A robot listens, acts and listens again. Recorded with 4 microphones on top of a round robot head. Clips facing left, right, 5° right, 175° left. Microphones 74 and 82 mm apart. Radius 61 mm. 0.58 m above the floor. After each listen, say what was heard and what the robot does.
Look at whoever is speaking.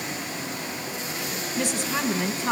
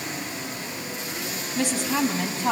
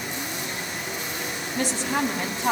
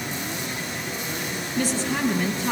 The woman speaking: 45° right. Turn 45° right.
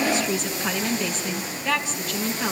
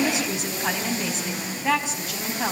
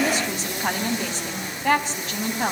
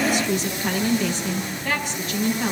The woman speaking is now 20° right. Turn 20° right.
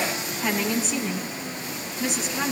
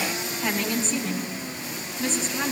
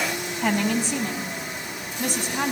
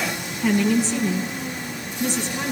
Found it: a woman speaking, straight ahead.